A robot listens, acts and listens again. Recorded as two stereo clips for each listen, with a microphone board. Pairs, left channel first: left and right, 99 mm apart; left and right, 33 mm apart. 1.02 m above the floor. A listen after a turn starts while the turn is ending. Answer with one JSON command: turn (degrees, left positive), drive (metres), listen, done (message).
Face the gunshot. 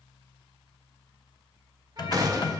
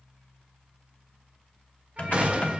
{"turn": -40}
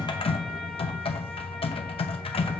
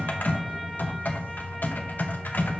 {"listen": true}
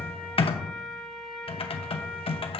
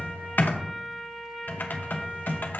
{"done": "I heard a gunshot, but can't make it out now. It was about straight ahead or 100° right."}